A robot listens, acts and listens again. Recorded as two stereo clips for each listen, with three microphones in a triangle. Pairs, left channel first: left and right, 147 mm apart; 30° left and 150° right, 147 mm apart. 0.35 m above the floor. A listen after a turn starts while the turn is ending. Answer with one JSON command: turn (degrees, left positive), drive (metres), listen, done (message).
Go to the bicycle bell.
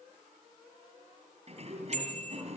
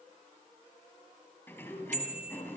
{"turn": -130}
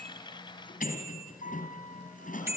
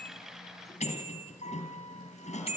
{"turn": -15}
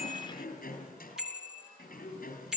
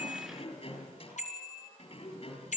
{"drive": 1.0}
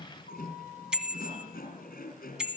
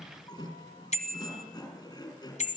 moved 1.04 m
{"drive": 1.0}
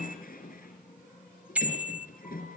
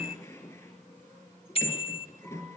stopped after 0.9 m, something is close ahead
{"turn": -10}
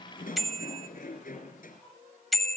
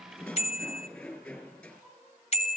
{"done": "Arrived at the bicycle bell, straight ahead."}